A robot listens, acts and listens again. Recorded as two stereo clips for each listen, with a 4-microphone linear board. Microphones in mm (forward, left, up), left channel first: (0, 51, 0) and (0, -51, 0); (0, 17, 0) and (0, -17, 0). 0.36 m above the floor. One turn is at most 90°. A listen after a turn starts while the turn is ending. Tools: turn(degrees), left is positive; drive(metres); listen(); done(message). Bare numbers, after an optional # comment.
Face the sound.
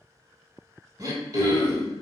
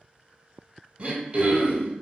# The throat clearing: about 35° right or 145° right.
turn(-35)
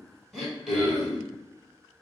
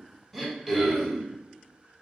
done("Found it: throat clearing, straight ahead.")